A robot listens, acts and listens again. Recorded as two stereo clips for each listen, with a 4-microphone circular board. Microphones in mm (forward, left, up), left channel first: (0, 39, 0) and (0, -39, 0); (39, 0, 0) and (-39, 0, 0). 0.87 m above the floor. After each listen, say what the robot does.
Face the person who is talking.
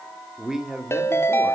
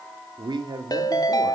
Turn 175° right.
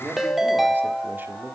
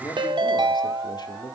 Turn 25° right.
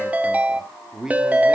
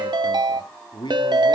Turn 10° right.
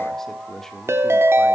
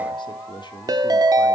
Keep listening.
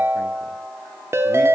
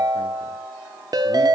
Keep listening.
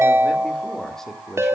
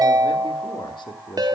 Found it: a man speaking, straight ahead.